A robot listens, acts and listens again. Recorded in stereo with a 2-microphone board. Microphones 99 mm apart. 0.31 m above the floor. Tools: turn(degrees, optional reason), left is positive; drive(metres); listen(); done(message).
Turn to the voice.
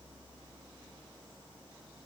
listen()
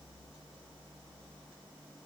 listen()
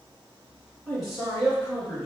turn(degrees=30)
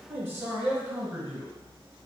turn(degrees=-20, reason="So it is at 20° right.")
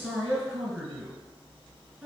turn(degrees=-10, reason="The man speaking is now 10° right.")
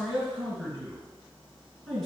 done("Facing the man speaking.")